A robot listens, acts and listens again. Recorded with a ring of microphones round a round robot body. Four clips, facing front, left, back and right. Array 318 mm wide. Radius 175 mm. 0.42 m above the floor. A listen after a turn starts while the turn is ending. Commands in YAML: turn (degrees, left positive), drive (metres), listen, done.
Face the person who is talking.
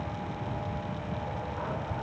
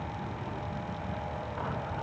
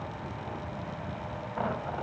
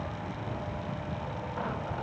listen: true
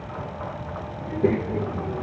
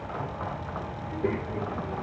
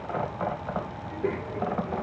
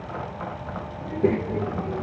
turn: -45
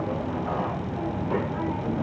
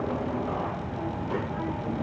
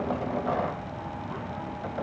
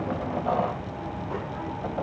turn: 10
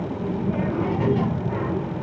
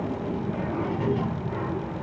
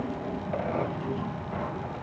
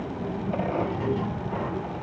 done: "Facing the child speaking."